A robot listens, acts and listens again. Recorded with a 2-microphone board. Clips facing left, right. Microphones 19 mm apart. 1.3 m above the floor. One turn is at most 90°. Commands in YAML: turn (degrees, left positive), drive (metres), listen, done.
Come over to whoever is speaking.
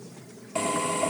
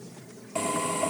listen: true
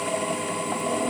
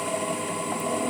listen: true
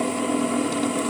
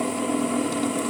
done: "I can't make out anyone speaking to turn to."